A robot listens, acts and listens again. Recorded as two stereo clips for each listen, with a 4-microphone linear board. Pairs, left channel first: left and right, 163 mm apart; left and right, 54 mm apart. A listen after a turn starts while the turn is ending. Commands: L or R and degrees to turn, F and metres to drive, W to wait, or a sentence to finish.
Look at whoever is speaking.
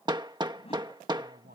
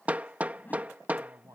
R70
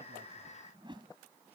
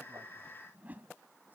W
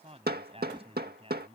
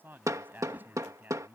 R35
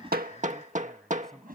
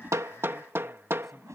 Facing the man speaking.